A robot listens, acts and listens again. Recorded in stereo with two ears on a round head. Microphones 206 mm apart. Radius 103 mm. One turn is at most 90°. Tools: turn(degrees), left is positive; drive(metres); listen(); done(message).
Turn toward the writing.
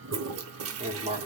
turn(degrees=-30)
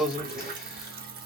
done("Facing the writing.")